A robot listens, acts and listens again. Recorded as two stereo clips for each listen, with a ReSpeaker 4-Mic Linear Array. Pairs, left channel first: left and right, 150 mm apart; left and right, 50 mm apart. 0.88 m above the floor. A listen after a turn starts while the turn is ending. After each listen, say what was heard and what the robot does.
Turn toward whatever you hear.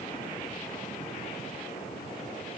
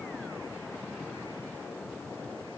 Keep listening.
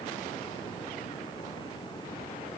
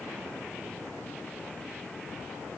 Keep listening.
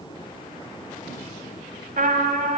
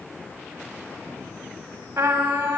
The trumpet: about 65° right or 115° right. Turn 65° right.
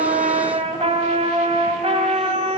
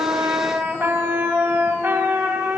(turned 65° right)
So it is at 45° right. Turn 45° right.
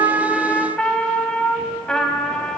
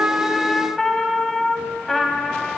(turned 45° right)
Found it: a trumpet, straight ahead, 1 to 2 m away.